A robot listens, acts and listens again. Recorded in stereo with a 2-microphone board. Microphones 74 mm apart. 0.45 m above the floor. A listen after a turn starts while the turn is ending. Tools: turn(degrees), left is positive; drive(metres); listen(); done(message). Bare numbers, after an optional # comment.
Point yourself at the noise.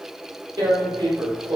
# The tearing paper: about 60° right or 120° right.
turn(-60)
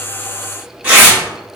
# So it is at 20° right.
turn(-20)
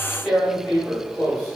done("Found it: tearing paper, straight ahead.")